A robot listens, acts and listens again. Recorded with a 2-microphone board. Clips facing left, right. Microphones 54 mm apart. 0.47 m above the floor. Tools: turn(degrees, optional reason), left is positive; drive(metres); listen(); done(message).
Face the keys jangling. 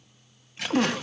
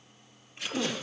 turn(degrees=75, reason="The keys jangling: about 75° left or 105° left.")
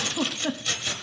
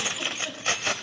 turn(degrees=-50, reason="So it is at 50° right.")
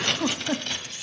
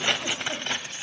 turn(degrees=-35, reason="The keys jangling is now 35° right.")
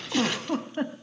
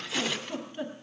done("Facing the keys jangling.")